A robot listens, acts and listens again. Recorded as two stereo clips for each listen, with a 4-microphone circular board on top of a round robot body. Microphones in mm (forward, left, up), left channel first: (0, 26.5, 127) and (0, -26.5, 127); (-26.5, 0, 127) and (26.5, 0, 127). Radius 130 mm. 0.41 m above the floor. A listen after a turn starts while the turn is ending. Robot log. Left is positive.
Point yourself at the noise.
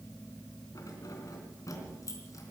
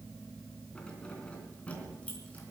note: The keys jangling: 110° left.
cmd yaw +110
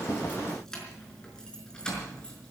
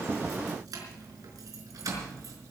note: The keys jangling is now 15° left.
cmd yaw +15
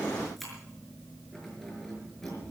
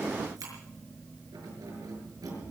end: Found it: keys jangling, straight ahead, over 4 m away.